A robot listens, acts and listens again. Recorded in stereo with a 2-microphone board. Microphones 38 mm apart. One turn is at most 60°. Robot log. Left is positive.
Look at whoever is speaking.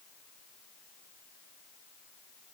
cmd idle
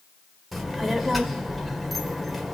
cmd yaw +30
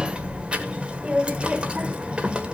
note: So it is at 30° right.
cmd yaw -30
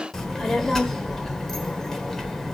end: Facing the child speaking.